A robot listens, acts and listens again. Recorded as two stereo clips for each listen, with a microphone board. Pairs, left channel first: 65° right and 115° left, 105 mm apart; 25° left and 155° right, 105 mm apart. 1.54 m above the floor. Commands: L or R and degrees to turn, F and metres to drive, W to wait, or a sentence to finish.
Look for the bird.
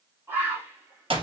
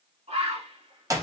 L180
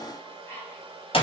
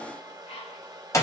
Found it: a bird, straight ahead.